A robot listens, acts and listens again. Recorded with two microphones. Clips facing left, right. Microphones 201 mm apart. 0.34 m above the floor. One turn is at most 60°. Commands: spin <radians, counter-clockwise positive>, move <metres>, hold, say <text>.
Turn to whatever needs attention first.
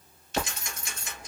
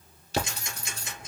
hold
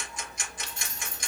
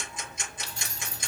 hold
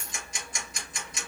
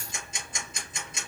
say I can't make out anything urgent to turn to.